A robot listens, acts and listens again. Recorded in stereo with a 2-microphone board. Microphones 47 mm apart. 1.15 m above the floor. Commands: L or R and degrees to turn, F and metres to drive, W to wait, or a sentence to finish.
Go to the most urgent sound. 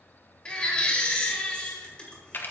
L20
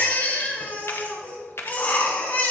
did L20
L140
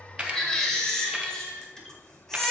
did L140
L10
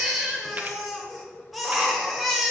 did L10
F1.0
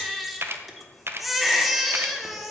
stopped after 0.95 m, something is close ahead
Arrived at the baby crying, straight ahead.